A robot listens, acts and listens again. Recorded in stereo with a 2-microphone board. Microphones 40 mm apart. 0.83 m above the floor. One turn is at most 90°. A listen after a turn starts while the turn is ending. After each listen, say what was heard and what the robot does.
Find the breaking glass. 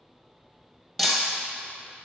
Turn 30° left.
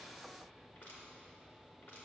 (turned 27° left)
Keep listening.
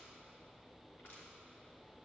I heard breaking glass, but can't make it out now. It was about 20° right or 145° left.